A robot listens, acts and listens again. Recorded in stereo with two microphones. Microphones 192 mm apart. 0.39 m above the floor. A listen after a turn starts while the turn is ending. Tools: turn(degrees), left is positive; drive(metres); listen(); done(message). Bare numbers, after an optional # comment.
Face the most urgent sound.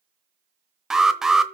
turn(-30)
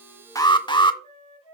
# So it is at 30° left.
turn(30)
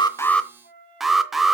done("Found it: an alarm, straight ahead.")